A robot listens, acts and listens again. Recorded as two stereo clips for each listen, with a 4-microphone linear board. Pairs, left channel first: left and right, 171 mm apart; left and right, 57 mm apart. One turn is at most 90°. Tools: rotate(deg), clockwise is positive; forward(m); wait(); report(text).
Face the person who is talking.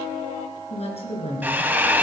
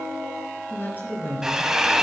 rotate(-35)
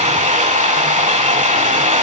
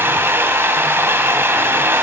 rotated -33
wait()
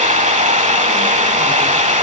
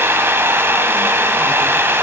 wait()
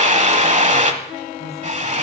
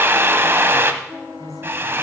report("I heard a woman speaking, but can't make it out now. It was about 5° left or 110° left.")